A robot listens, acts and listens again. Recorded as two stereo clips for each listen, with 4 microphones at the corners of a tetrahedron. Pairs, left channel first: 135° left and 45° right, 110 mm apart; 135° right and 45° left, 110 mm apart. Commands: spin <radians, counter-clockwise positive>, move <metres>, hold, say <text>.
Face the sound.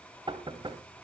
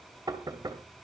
say Facing the knocking, 2 to 4 m away.